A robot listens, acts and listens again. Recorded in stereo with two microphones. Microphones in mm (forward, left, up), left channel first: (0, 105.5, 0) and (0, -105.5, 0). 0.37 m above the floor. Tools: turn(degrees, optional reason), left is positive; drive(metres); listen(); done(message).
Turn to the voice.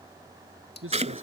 turn(degrees=-90)
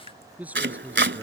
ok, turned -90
done("Found it: a man speaking, straight ahead.")